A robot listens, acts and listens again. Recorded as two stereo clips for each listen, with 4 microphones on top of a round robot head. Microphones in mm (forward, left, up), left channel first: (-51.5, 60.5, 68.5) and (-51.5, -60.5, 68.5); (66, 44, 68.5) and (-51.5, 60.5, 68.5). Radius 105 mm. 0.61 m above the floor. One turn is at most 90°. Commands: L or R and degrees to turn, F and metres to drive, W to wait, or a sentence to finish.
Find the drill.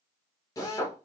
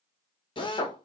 L30
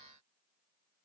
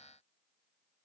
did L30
W
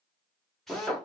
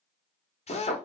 Found it: a drill, straight ahead.